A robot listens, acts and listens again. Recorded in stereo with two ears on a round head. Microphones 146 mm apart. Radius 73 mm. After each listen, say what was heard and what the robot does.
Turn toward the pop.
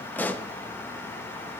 Turn 30° left.
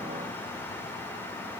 Keep listening.
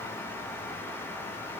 I heard a pop, but can't make it out now. It was about 20° right or 140° left.